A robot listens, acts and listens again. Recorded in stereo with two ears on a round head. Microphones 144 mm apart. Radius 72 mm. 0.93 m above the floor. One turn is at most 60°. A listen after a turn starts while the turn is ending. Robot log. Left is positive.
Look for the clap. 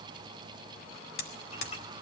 cmd idle
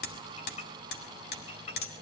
cmd idle
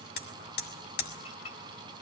end: I can't make out a clap to turn to.